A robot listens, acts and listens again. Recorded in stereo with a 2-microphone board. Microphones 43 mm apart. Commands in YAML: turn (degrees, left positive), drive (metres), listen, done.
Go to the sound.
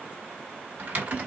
turn: -45
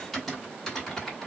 drive: 1.0
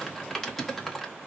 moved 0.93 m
drive: 1.0
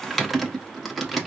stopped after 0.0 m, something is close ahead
done: "Arrived at the typing on a keyboard, straight ahead."